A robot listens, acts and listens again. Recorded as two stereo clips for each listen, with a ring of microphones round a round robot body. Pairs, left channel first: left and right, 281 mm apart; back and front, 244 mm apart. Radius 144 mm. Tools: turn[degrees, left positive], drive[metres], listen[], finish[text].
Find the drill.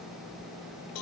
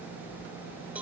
Action: listen[]
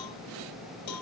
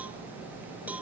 Action: listen[]
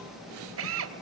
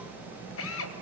Thought: The drill: 135° right.
Action: turn[-135]
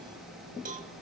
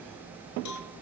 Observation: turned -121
Thought: Nothing new. It was at 15° right.
Action: turn[-15]
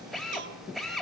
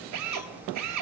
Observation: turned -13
Action: finish[Facing the drill.]